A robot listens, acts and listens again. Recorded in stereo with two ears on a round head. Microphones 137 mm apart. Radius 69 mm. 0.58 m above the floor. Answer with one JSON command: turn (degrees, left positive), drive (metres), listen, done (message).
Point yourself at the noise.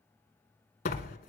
{"turn": 60}
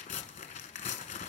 {"turn": 55}
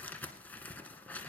{"turn": 10}
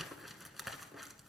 {"done": "Facing the tearing paper."}